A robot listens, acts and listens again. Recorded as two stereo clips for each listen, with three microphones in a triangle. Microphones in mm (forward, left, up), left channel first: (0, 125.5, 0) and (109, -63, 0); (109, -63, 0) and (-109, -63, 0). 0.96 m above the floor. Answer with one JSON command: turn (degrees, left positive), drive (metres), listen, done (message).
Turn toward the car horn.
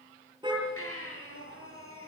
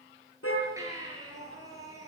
{"turn": 10}
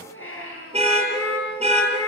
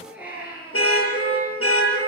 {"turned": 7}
{"done": "Facing the car horn."}